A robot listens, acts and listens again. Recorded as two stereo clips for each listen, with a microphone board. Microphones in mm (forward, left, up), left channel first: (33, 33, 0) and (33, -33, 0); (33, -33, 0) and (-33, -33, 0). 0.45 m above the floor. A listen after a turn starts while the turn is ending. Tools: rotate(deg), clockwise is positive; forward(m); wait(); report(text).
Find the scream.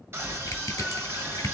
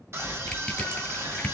rotate(135)
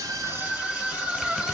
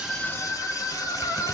rotate(20)
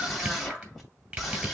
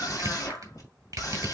report("Facing the scream.")